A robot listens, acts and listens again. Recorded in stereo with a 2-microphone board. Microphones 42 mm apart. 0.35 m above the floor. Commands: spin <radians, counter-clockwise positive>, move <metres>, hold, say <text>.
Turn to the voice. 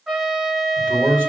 spin -0.79
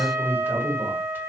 spin -1.31
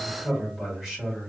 spin -0.26
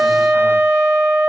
hold
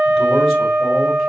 hold
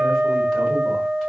say I heard a man speaking from this way, but can't make it out now.